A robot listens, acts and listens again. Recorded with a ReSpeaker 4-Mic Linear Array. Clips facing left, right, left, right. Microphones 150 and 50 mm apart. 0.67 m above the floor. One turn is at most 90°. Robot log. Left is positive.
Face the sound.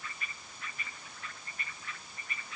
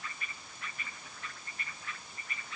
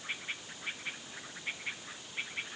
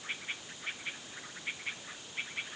cmd idle
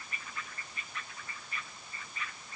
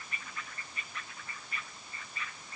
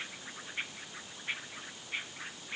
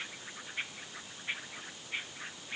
cmd idle
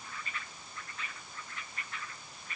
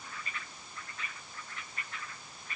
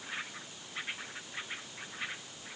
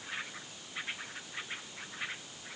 end: I can't make out anything.